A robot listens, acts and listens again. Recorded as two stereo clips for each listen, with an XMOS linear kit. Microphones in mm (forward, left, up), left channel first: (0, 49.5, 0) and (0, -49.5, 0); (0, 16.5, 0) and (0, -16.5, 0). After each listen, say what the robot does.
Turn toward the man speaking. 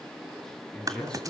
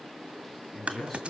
Turn 30° left.
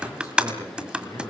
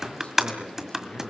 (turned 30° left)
Turn 145° left.
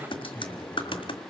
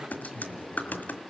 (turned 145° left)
Turn 20° left.
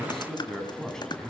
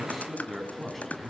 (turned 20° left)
Found it: a man speaking, straight ahead, over 4 m away.